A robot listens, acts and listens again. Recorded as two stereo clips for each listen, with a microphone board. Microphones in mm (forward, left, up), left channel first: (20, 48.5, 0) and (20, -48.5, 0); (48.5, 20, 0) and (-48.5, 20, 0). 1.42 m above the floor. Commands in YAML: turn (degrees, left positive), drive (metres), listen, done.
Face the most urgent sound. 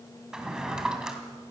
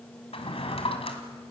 listen: true
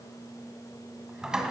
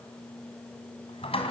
listen: true
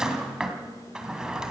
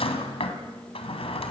done: "I can't make out anything urgent to turn to."